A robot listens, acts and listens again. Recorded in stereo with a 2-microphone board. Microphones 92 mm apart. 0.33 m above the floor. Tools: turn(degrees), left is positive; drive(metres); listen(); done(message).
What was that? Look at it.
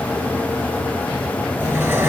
turn(degrees=-25)
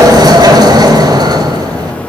turn(degrees=-125)
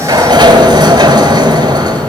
turn(degrees=-50)
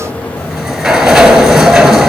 done("Facing the sliding door, 1 to 2 m away.")